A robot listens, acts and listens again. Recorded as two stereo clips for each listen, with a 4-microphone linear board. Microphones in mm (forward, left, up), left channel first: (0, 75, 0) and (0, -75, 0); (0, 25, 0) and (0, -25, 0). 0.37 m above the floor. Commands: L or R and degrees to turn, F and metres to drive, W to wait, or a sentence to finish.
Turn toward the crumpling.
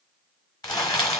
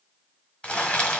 L25
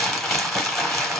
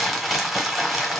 Facing the crumpling, 1 to 2 m away.